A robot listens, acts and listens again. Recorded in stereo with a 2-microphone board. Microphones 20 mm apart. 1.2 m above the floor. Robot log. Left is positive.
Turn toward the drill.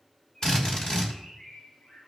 note: The drill: about 45° left or 135° left.
cmd yaw +45
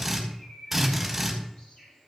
end: Facing the drill.